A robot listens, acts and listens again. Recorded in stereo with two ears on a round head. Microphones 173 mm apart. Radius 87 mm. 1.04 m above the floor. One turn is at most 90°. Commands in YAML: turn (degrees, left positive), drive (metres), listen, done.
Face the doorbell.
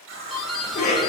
turn: 30
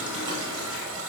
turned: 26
listen: true
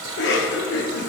listen: true
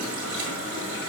done: "I heard a doorbell, but can't make it out now. It was about 25° right or 155° left."